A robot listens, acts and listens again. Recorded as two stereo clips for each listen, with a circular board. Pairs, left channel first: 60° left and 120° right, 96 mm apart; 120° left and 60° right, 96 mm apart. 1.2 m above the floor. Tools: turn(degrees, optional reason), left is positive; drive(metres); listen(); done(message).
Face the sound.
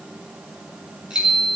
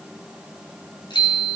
turn(degrees=160, reason="The bicycle bell: 160° left.")
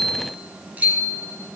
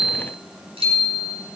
turn(degrees=-45, reason="The bicycle bell is now 45° right.")
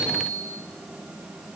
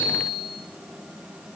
done("Facing the bicycle bell, over 4 m away.")